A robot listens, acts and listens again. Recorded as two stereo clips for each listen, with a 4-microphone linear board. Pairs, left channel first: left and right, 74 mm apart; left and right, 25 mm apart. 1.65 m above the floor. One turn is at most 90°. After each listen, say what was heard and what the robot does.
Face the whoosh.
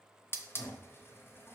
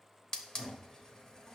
Keep listening.
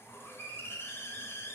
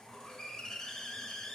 Keep listening.
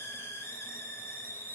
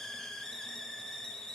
I can't make out a whoosh to turn to.